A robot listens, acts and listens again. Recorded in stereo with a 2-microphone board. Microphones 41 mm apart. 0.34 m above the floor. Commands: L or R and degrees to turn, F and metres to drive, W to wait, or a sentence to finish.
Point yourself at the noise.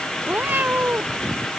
R50
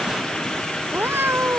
R70
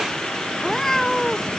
L10
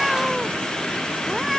Facing the cat meowing.